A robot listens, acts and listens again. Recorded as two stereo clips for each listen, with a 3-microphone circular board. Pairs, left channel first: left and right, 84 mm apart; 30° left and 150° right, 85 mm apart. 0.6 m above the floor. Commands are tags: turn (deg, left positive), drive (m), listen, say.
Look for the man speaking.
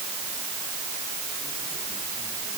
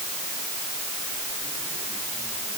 <listen/>
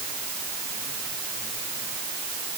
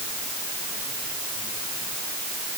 <listen/>
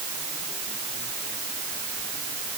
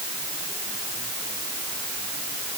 <say>I can't make out a man speaking.</say>